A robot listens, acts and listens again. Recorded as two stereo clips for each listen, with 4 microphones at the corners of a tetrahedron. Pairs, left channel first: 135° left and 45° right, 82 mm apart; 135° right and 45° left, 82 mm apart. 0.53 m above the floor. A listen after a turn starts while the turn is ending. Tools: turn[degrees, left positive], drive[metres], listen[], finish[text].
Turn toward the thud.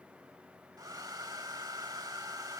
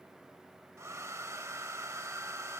Action: listen[]
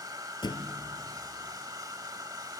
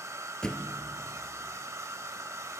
Thought: The thud: 145° left.
Action: turn[145]
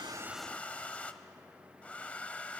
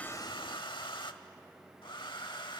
Action: finish[I heard a thud from this way, but can't make it out now.]